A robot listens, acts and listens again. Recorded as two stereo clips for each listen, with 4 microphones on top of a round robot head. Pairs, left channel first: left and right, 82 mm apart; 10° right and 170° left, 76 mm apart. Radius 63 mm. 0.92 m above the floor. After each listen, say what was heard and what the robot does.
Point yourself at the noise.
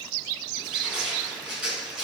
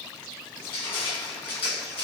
Facing the crushing, over 4 m away.